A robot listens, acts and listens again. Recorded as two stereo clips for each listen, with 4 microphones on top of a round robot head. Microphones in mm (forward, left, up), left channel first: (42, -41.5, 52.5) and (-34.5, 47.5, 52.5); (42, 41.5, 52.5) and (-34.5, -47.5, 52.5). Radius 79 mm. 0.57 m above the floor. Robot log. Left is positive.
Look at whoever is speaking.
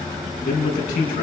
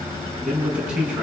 note: The man speaking: 50° right.
cmd yaw -50
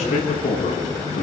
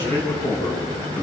note: The man speaking is now 20° right.
cmd yaw -20
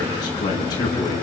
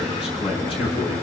end: Found it: a man speaking, straight ahead, over 4 m away.